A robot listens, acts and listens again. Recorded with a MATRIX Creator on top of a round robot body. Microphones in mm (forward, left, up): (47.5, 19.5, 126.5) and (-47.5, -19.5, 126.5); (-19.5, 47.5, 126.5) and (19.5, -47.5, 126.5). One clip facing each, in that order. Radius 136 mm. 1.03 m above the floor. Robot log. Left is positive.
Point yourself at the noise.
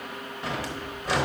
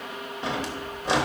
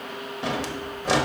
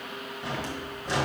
note: The drawer: 135° left.
cmd yaw +135
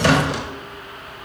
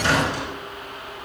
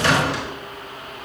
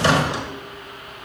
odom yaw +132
end: Facing the drawer, under 1 m away.